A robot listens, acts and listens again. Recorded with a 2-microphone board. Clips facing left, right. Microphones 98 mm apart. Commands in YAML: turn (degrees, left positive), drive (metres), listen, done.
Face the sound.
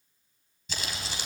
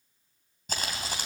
turn: -45
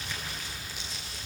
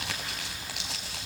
turn: -85
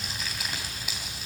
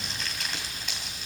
done: "Found it: crumpling, straight ahead, 2 to 4 m away."